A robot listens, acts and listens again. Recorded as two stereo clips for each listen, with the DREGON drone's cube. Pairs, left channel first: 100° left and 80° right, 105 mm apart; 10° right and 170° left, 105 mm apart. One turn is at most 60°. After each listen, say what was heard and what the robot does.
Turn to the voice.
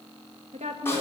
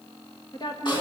The woman speaking: 60° right. Turn 60° right.
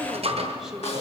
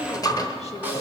Keep listening.
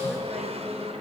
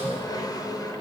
Keep listening.
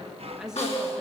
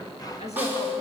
Facing where the woman speaking came from. I can't hear it now.